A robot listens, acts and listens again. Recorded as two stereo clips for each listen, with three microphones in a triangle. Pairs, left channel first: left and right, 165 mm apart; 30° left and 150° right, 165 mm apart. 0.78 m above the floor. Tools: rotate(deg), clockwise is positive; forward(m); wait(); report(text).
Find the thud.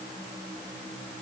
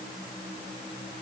wait()
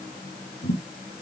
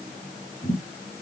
rotate(-85)
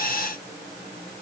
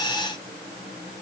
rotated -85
report("Facing where the thud came from. I can't hear it now.")